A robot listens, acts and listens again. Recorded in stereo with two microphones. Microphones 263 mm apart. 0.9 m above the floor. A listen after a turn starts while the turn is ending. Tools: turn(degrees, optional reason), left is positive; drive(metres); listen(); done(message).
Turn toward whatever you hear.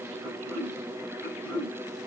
turn(degrees=-65, reason="The throat clearing: about 65° right or 115° right.")
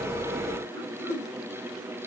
done("Found it: throat clearing, straight ahead, over 4 m away.")